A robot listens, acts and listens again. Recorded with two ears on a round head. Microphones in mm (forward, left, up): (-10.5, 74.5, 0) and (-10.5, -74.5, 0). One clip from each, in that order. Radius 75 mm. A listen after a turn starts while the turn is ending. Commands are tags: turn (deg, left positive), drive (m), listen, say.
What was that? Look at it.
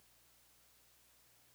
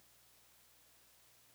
<listen/>
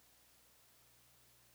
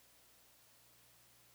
<listen/>
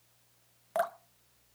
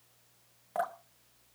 <turn deg="45"/>
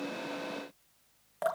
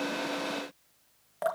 <say>Found it: dripping, straight ahead.</say>